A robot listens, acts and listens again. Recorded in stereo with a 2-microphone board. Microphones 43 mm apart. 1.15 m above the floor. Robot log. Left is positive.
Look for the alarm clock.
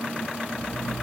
note: The alarm clock: about 25° right or 155° right.
cmd yaw -25
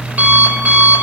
note: So it is at 125° right.
cmd yaw -125
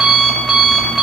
end: Facing the alarm clock, 1 to 2 m away.